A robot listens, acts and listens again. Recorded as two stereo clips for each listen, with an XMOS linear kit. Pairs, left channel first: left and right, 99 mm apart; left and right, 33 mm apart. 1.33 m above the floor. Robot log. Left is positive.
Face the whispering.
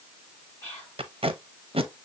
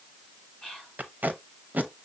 note: The whispering: about 20° left or 160° left.
cmd yaw +20
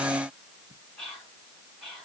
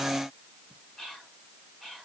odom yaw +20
end: Found it: whispering, straight ahead, 2 to 4 m away.